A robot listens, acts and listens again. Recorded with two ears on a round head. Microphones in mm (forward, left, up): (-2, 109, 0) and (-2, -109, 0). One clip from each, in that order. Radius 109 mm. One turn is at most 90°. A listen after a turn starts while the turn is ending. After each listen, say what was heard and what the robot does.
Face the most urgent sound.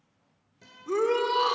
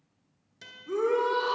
The shout: about 75° left or 105° left. Turn 75° left.
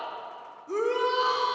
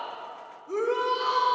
So it is at 15° left. Turn 15° left.
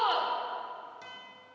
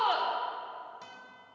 Keep listening.
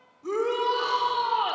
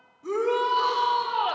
Found it: a shout, straight ahead.